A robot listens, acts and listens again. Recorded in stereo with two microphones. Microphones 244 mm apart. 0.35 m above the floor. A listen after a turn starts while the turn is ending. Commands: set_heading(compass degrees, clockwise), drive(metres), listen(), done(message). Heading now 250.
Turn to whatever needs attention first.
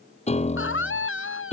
set_heading(195)
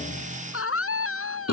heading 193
set_heading(128)
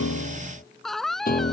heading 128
done("Facing the scream.")